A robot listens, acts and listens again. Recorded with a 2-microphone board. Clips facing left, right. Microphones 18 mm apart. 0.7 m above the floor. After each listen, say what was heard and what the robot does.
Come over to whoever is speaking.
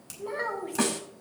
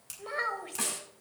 The child speaking: about 40° right or 140° right. Turn 40° right.
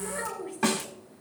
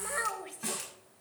So it is at 95° right. Turn 95° right.
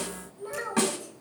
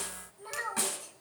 The child speaking is now 10° right. Turn 10° right.
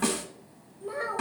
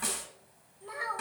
Drive 1.0 m forward.
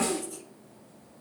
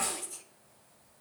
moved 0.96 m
Drive 1.0 m forward.
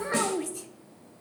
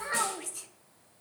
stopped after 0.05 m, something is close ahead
The child speaking is now 10° right. Turn 10° right.
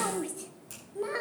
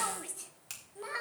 I am next to the child speaking.